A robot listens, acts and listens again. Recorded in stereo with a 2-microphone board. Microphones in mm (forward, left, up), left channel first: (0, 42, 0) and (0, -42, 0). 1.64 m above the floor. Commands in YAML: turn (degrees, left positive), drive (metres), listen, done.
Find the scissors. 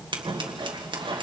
turn: -70
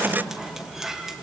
done: "Facing the scissors, 1 to 2 m away."